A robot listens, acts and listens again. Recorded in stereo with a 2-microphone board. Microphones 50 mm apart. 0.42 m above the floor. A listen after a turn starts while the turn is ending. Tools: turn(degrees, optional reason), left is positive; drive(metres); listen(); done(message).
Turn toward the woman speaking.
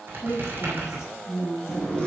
turn(degrees=65, reason="The woman speaking: about 65° left or 115° left.")
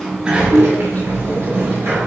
listen()
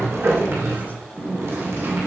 listen()
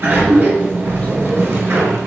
done("I heard a woman speaking, but can't make it out now. It was about straight ahead or 50° left.")